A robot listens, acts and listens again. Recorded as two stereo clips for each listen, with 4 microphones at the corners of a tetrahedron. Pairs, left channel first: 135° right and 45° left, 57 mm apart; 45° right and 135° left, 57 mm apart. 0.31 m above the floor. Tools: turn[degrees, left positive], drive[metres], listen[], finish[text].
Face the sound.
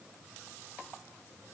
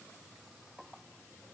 Action: listen[]
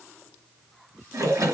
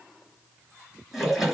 Thought: The splash: 45° left.
Action: turn[45]
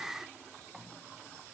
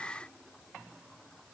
Action: finish[I heard a splash from this way, but can't make it out now.]